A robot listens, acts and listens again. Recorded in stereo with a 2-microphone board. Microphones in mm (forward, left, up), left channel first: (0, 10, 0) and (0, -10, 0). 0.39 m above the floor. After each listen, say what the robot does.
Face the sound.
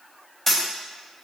Turn 30° left.
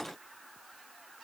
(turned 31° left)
Keep listening.
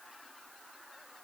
I heard a dropped coin, but can't make it out now. It was about 20° right or 140° left.